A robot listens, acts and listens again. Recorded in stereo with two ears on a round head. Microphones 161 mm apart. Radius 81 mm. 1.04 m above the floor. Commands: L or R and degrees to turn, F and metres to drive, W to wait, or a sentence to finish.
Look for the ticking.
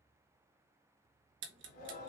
R70
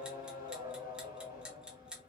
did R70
Found it: ticking, straight ahead, 1 to 2 m away.